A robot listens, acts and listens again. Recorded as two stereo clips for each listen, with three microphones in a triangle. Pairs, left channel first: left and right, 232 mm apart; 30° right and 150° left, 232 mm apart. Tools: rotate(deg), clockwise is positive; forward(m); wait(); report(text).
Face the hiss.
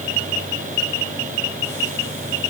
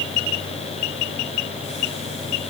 wait()
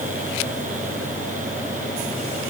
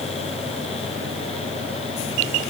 wait()
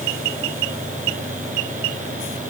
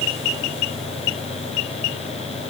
report("I can't make out a hiss.")